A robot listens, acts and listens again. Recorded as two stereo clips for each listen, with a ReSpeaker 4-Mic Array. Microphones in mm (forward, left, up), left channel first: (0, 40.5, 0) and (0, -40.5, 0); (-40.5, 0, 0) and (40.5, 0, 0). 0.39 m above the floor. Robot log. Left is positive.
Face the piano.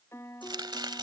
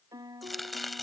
note: The piano: 35° left.
cmd yaw +35
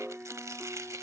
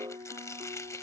note: The piano is now 10° right.
cmd yaw -10
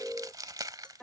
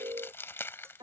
end: Facing the piano.